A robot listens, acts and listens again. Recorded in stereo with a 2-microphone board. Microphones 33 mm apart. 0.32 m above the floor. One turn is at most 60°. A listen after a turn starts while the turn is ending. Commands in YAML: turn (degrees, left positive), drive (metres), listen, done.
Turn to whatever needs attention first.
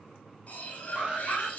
turn: -40
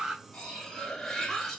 turn: -10
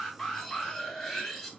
done: "Found it: an alarm, straight ahead, 2 to 4 m away."